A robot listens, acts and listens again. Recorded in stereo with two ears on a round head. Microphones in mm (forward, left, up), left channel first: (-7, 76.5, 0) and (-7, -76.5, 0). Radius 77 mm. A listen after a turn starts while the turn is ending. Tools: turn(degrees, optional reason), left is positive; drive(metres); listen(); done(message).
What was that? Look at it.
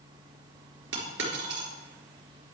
turn(degrees=-90)
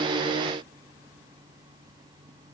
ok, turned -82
turn(degrees=-10, reason="Nothing new. It was at 10° right.")
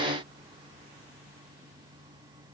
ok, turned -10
done("I heard a dropped coin from this way, but can't make it out now.")